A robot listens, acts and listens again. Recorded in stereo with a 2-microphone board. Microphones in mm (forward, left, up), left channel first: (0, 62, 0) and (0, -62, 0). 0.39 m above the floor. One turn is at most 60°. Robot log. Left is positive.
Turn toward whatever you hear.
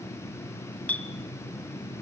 cmd yaw +30
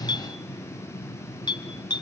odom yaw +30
note: So it is at 135° left.
cmd yaw +60
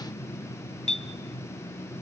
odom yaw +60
note: The clink is now 85° left.
cmd yaw +60
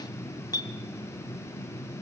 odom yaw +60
note: The clink is now 35° left.
cmd yaw +35
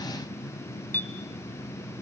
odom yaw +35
note: The clink is now 20° left.
cmd yaw +20
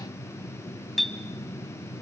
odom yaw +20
end: Facing the clink.